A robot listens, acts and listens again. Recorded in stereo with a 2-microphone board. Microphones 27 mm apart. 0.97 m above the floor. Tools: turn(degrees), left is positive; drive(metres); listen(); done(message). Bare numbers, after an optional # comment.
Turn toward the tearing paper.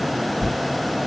# The tearing paper: about 55° left or 125° left.
turn(55)
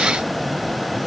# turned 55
listen()
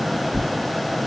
# So it is at 60° left.
turn(60)
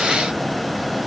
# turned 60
listen()
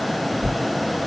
# The tearing paper is now 15° left.
turn(15)
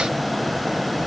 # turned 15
listen()
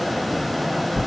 done("Facing the tearing paper.")